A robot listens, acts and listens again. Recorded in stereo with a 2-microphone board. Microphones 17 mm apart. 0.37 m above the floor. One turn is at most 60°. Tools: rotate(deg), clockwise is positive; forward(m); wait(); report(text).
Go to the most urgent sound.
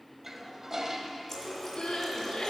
rotate(-60)
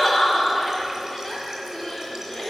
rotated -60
rotate(-30)
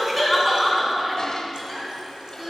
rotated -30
forward(1.0)
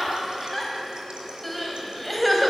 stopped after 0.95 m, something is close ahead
rotate(-10)
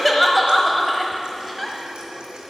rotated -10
report("Arrived at the crying, straight ahead.")